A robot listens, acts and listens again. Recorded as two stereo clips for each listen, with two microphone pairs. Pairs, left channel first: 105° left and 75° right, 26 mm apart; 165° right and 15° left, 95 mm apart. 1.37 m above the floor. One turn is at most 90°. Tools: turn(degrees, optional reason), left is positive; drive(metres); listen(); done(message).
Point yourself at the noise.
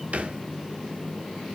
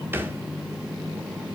turn(degrees=-55, reason="The thud: 55° right.")
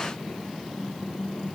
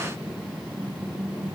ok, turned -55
done("I heard a thud from this way, but can't make it out now.")